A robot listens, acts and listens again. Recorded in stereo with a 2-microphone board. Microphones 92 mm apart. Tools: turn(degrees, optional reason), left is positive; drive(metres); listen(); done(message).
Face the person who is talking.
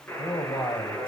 turn(degrees=60, reason="The man speaking: about 60° left or 120° left.")
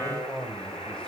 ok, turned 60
turn(degrees=10, reason="So it is at 10° left.")
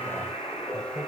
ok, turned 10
listen()
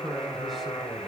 done("Found it: a man speaking, straight ahead, 2 to 4 m away.")